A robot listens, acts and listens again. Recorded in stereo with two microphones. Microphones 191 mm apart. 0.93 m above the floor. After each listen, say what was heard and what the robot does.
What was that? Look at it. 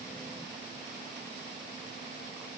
Keep listening.
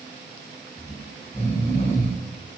The snoring: about 35° left or 145° left. Turn 35° left.
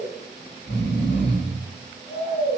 So it is at 110° left. Turn 110° left.
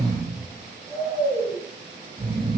The snoring is now 25° right. Turn 25° right.
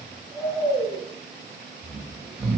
The snoring is now 10° left. Turn 10° left.
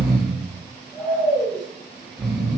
Found it: snoring, straight ahead.